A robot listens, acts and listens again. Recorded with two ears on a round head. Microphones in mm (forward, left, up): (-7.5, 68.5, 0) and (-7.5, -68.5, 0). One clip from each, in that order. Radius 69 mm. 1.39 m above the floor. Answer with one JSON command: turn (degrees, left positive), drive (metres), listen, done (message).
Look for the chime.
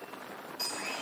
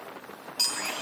{"turn": -65}
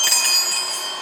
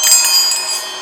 {"turn": -40}
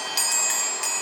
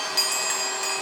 {"turn": 15}
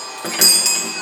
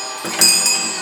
{"done": "Found it: a chime, straight ahead."}